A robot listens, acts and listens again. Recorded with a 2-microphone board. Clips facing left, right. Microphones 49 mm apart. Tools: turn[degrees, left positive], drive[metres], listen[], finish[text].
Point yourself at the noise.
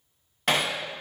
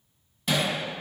Thought: The hammering: about 60° left or 120° left.
Action: turn[60]
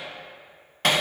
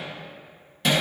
Thought: So it is at 60° left.
Action: turn[60]
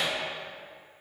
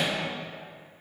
Action: listen[]
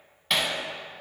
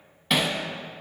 Action: finish[Facing the hammering.]